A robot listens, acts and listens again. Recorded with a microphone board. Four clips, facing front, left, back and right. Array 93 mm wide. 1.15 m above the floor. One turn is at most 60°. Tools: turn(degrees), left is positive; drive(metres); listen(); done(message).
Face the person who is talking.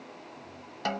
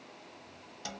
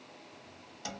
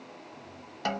listen()
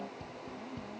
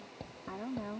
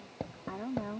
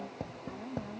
turn(degrees=60)
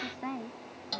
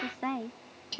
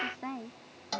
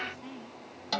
turn(degrees=60)
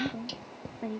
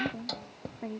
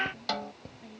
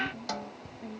turn(degrees=35)
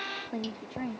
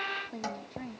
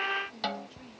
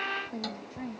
done("Facing the woman speaking.")